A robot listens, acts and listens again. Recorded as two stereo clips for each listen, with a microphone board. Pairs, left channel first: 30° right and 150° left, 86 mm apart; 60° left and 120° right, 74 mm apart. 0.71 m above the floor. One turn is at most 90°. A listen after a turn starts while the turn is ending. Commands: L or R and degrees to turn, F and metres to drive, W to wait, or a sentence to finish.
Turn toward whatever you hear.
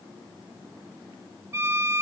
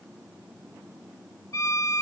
L90
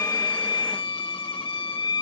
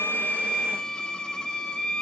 R20
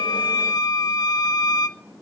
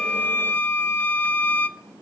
Facing the violin.